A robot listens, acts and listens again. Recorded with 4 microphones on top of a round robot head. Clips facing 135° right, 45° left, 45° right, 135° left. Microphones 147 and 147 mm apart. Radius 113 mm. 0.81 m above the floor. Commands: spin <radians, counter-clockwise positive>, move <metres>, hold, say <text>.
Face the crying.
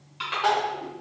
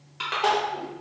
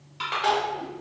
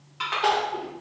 spin 1.75
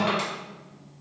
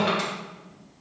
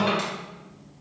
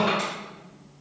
hold
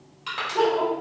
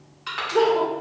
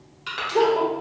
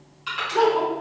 spin 0.35
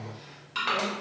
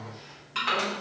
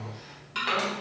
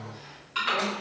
hold
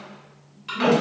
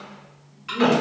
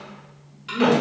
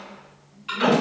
say Facing the crying.